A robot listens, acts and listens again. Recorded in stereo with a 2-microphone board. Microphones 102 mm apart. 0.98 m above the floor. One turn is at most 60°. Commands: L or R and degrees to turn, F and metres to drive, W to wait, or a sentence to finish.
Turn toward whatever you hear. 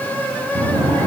L45
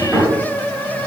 Found it: a drawer, straight ahead, 2 to 4 m away.